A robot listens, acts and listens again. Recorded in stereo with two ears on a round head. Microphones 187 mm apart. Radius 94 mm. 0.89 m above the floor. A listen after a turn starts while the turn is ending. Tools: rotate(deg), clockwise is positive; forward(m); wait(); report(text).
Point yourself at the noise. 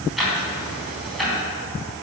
rotate(-30)
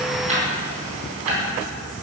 rotate(30)
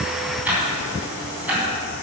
report("Facing the ticking, 2 to 4 m away.")